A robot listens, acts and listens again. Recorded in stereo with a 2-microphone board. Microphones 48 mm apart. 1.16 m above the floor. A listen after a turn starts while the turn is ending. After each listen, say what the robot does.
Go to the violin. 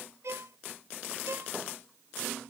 Turn 70° right.
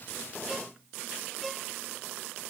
Drive 1.0 m forward.
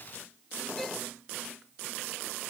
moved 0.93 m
Keep listening.
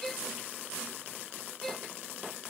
Turn 10° left.
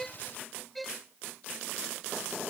Drive 1.0 m forward.
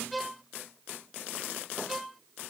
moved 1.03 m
Drive 1.0 m forward.
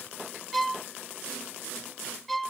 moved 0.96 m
Drive 1.0 m forward.
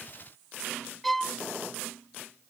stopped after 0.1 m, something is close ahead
I am next to the violin.